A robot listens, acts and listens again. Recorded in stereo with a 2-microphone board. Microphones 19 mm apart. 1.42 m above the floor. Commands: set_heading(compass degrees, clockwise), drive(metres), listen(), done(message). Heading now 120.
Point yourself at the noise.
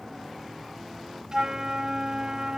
set_heading(155)
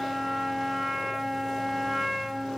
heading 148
done("Found it: a flute, straight ahead.")